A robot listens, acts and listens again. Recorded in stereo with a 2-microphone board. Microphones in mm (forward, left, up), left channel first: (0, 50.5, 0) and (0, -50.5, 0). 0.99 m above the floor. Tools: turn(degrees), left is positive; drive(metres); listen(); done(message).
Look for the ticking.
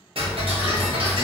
turn(degrees=-65)
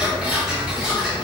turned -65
turn(degrees=-10)
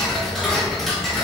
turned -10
done("Facing the ticking.")